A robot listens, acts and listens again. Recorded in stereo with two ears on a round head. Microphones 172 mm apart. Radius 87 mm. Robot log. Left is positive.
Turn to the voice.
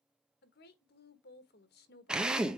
note: The woman speaking: about 55° left or 125° left.
cmd yaw +55
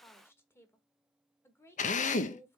note: So it is at 15° left.
cmd yaw +15
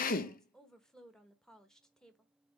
end: Found it: a woman speaking, straight ahead.